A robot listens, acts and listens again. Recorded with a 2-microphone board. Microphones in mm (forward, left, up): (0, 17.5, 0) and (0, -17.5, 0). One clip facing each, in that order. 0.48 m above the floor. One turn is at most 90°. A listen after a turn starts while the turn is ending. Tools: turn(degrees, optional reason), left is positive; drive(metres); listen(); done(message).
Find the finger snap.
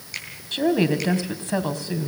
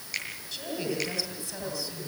turn(degrees=30)
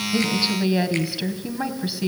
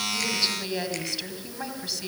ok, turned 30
listen()
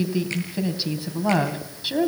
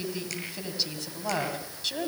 listen()
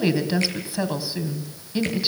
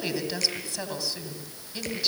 done("I heard a finger snap, but can't make it out now. It was about 30° right or 150° left.")